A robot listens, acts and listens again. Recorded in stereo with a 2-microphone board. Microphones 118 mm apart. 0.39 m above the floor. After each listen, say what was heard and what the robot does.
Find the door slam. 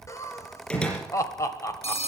Turn 30° left.
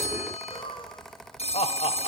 Keep listening.
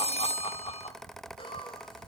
I heard a door slam, but can't make it out now. It was about 20° right or 140° left.